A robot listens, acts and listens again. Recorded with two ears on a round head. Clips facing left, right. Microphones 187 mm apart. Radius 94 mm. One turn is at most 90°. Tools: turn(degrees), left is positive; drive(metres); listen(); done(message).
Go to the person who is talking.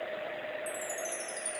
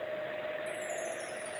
listen()
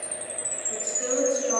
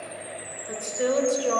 turn(degrees=-90)
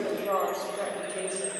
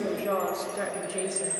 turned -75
turn(degrees=-15)
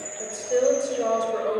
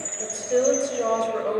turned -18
drive(metres=1.0)
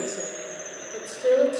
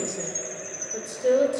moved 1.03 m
drive(metres=1.0)
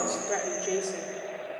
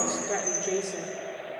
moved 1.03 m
drive(metres=1.0)
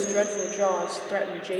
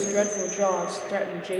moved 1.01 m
drive(metres=1.0)
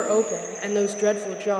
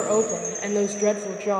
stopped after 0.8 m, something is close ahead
turn(degrees=15)
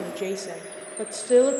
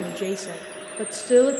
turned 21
done("Arrived at the woman speaking, straight ahead.")